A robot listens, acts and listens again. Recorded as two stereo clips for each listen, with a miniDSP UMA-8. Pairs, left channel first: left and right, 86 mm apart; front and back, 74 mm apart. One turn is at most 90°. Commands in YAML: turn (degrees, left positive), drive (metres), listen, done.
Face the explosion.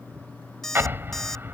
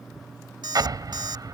turn: -90
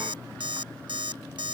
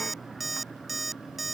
turn: -65
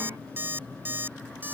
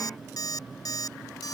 done: "Facing where the explosion came from. I can't hear it now."